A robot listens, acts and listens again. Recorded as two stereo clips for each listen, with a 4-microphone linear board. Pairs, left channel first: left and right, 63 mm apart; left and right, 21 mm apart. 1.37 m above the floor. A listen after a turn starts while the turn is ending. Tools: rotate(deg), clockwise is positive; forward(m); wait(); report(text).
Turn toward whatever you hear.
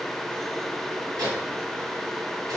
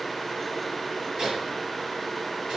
rotate(90)
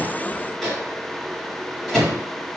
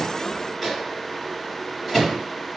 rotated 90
report("Found it: a microwave, straight ahead.")